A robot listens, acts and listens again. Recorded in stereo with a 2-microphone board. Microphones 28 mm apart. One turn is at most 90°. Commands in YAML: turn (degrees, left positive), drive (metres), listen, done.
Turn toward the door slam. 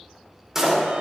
turn: -20
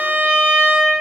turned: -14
listen: true
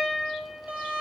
done: "I heard a door slam, but can't make it out now. It was about 5° right or 145° right."